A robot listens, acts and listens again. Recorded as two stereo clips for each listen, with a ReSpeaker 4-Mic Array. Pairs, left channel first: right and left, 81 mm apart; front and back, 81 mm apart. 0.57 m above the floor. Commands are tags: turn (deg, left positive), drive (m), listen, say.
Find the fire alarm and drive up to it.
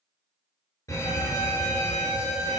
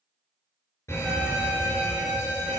<turn deg="-50"/>
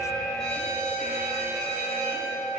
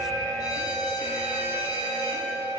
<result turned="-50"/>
<turn deg="-10"/>
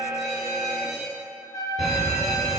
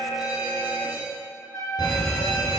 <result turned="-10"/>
<drive m="1.0"/>
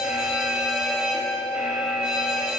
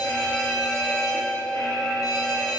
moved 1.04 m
<turn deg="15"/>
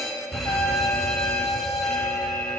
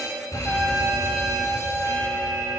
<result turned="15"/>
<drive m="1.0"/>
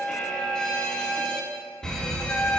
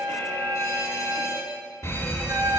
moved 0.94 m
<turn deg="-10"/>
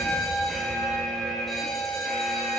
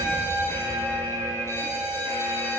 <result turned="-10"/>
<drive m="1.0"/>
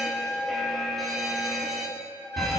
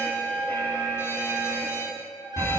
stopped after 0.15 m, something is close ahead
<say>I am next to the fire alarm.</say>